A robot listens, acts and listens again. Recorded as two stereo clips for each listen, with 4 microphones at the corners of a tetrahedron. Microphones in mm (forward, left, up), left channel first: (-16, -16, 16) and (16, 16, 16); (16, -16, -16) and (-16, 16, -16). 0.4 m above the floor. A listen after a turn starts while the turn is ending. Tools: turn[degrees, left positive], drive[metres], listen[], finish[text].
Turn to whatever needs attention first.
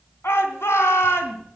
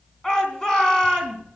Thought: The shout: 120° right.
Action: turn[-120]
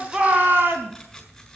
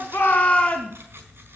Thought: The shout is now 10° left.
Action: turn[10]
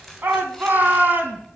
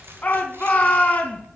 Action: finish[Facing the shout, 2 to 4 m away.]